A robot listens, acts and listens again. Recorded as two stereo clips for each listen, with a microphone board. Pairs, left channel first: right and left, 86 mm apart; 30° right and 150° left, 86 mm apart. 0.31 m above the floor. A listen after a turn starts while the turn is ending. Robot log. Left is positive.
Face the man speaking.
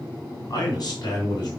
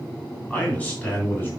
note: The man speaking: 90° right.
cmd yaw -90
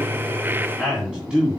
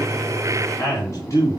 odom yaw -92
note: The man speaking is now 15° left.
cmd yaw +15
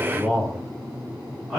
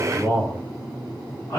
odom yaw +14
note: The man speaking is now 10° left.
cmd yaw +10
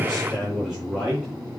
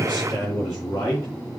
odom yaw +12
end: Facing the man speaking, 2 to 4 m away.